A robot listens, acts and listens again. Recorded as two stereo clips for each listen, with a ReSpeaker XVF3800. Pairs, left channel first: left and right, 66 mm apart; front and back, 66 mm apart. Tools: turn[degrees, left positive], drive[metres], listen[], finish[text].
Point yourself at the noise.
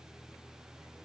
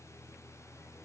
Action: listen[]
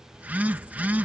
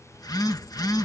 Thought: The phone buzzing: 25° right.
Action: turn[-25]
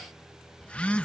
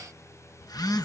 Thought: The phone buzzing is now 20° left.
Action: turn[20]
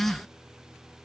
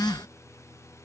Action: finish[Facing the phone buzzing.]